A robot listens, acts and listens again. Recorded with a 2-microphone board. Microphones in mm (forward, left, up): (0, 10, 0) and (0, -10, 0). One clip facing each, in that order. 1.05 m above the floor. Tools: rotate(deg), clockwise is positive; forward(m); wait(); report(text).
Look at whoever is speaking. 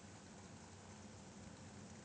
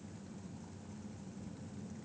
wait()
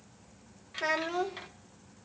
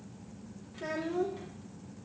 rotate(-55)
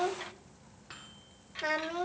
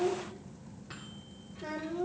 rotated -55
rotate(-65)
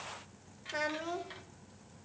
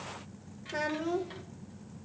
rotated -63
report("Found it: a child speaking, straight ahead.")